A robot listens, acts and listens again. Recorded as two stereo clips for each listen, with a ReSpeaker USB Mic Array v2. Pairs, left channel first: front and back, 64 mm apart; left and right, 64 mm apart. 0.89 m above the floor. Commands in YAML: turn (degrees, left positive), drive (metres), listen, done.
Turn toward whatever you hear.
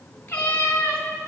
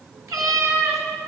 turn: -55
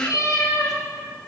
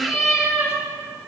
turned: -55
turn: -10
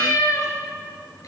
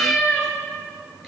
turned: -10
done: "Facing the cat meowing, over 4 m away."